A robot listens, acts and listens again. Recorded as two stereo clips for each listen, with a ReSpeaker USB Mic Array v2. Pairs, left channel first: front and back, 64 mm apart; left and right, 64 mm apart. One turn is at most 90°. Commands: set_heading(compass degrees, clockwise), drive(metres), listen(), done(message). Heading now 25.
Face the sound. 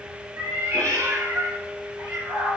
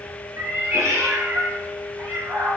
set_heading(115)
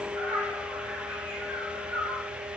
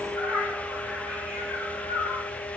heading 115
set_heading(155)
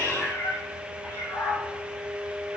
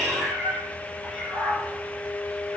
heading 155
done("Facing the cat meowing, 2 to 4 m away.")